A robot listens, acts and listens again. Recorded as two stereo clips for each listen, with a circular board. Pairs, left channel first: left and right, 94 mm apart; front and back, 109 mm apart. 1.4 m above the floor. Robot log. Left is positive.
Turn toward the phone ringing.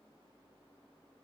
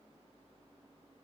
cmd idle
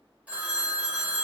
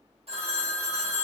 note: The phone ringing: 165° right.
cmd yaw -165
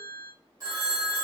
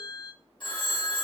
note: The phone ringing is now 40° right.
cmd yaw -40
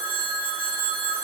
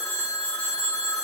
note: The phone ringing is now 25° right.
cmd yaw -25
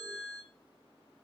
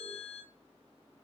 note: The phone ringing is now 10° right.
cmd yaw -10
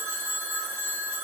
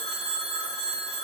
end: Found it: a phone ringing, straight ahead, 1 to 2 m away.